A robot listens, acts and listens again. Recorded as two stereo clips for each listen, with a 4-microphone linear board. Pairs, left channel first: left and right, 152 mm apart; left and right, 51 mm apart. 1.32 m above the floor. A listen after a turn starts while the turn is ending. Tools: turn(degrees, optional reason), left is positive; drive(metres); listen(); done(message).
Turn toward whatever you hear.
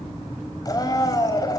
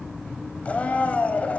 turn(degrees=25, reason="The blender: about 25° left or 155° left.")
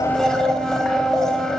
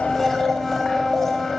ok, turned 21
done("Found it: a blender, straight ahead, over 4 m away.")